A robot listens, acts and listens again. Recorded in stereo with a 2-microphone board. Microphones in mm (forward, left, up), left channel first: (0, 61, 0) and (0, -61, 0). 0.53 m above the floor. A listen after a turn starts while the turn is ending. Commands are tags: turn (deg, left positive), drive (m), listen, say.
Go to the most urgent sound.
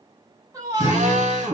<turn deg="-30"/>
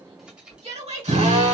<turn deg="-120"/>
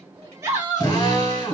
<turn deg="-15"/>
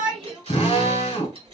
<listen/>
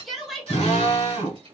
<drive m="1.0"/>
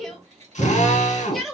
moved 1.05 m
<drive m="1.0"/>
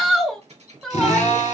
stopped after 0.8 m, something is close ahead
<say>I am next to the shout.</say>